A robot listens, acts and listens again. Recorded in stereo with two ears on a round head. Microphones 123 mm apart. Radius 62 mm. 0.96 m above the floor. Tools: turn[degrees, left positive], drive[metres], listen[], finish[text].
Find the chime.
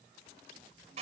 Action: listen[]
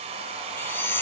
Thought: The chime: about 15° left or 165° left.
Action: turn[15]
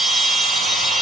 Action: finish[Facing the chime, 1 to 2 m away.]